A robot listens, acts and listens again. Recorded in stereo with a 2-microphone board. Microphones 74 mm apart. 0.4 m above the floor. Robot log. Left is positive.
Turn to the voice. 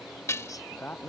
note: The man speaking: about 20° left or 160° left.
cmd yaw +20
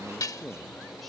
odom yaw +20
end: Facing the man speaking.